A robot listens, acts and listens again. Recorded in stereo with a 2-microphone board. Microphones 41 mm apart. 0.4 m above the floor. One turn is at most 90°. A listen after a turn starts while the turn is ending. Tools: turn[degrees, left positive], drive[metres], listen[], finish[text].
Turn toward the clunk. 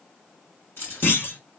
Thought: The clunk: about 65° left or 115° left.
Action: turn[65]
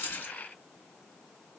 Action: listen[]
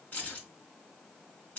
Action: finish[I heard a clunk, but can't make it out now. It was about straight ahead or 50° left.]